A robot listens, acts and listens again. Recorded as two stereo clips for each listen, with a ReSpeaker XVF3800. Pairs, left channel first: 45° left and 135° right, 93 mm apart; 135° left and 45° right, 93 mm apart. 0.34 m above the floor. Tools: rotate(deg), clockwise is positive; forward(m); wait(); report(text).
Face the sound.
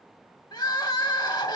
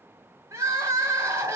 rotate(-10)
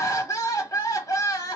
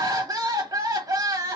report("Found it: crying, straight ahead, under 1 m away.")